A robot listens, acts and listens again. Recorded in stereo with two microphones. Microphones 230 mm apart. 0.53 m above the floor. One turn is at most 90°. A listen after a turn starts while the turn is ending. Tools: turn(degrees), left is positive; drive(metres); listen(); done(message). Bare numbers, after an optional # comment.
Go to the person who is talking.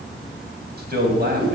# The man speaking: about 45° right or 135° right.
turn(-45)
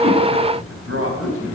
# So it is at 85° right.
turn(-85)
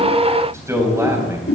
# The man speaking is now 15° right.
turn(-15)
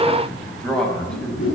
drive(1.0)
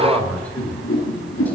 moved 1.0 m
drive(1.0)
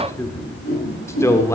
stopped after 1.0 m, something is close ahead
# The man speaking is now 15° left.
turn(15)
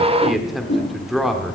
done("Arrived at the man speaking, straight ahead.")